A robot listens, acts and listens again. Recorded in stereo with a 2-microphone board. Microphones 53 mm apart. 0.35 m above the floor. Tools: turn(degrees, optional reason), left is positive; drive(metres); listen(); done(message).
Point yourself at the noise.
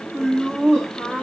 turn(degrees=30)
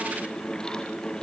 listen()
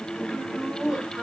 turn(degrees=-30)
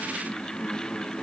listen()
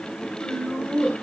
turn(degrees=40, reason="So it is at 40° left.")
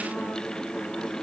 listen()
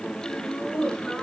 turn(degrees=15, reason="The laughter is now 15° left.")
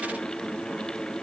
listen()
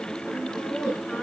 done("Found it: laughter, straight ahead.")